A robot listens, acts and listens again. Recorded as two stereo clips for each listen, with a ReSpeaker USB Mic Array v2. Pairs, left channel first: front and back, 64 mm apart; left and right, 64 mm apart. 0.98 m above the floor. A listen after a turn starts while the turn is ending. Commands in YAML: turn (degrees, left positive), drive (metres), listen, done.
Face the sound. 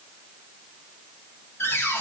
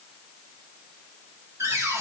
turn: -50
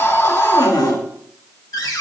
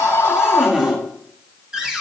turn: -10
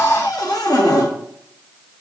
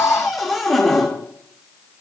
done: "Facing the cupboard door."